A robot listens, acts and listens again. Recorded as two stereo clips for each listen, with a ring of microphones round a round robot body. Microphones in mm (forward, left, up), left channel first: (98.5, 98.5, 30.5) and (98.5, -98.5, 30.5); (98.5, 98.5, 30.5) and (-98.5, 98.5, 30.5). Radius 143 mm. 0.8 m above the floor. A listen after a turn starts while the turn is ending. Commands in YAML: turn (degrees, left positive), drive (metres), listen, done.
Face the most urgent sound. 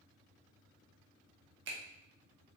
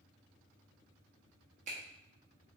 listen: true
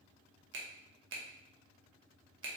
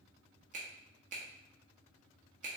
listen: true
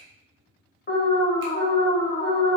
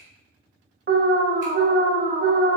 turn: 140
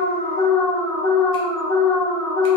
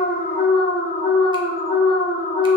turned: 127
turn: 10
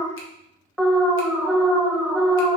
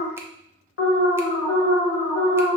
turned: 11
done: "Facing the alarm."